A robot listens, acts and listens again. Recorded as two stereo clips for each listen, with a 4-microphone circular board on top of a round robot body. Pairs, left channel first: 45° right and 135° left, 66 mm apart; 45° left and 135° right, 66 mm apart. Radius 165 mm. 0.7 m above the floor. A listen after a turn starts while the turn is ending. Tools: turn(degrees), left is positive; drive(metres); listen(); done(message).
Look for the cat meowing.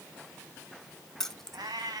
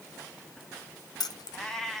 turn(degrees=130)
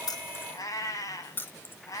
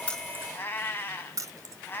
turn(degrees=-15)
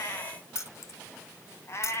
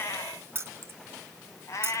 done("Facing the cat meowing, 2 to 4 m away.")